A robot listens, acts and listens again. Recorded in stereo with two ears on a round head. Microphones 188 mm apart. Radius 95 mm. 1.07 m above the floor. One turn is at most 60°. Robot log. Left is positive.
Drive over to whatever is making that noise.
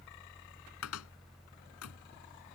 cmd yaw +60
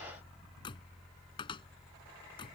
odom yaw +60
note: So it is at 25° left.
cmd yaw +25
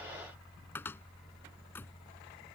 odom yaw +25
note: The cupboard door is now 10° left.
cmd yaw +10
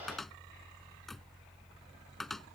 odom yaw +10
cmd fwd 1.0
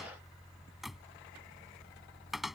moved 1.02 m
cmd fwd 1.0
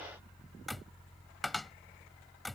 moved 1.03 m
cmd fwd 1.0
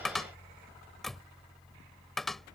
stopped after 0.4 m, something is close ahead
end: Arrived at the cupboard door, straight ahead.